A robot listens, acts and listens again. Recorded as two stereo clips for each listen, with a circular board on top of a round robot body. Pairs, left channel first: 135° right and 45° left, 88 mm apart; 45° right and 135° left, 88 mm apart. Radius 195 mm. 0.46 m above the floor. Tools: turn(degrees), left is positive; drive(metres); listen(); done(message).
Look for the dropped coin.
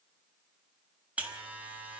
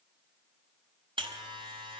listen()
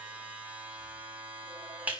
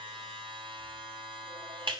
listen()
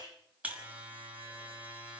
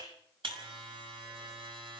done("I can't make out a dropped coin to turn to.")